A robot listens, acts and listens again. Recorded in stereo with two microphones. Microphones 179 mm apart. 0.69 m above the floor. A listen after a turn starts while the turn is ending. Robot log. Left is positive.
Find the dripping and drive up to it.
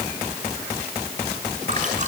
cmd idle
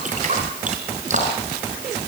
note: The dripping: about 45° right or 135° right.
cmd yaw -45
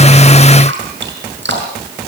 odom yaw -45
note: So it is at 90° right.
cmd yaw -90
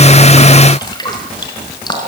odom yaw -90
note: The dripping is now 25° left.
cmd yaw +25
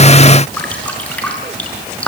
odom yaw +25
cmd fwd 1.0
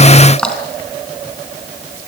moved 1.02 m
cmd fwd 1.0
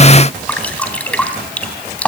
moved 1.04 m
cmd fwd 1.0
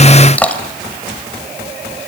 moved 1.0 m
cmd fwd 1.0
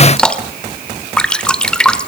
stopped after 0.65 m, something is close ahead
end: Arrived at the dripping, straight ahead.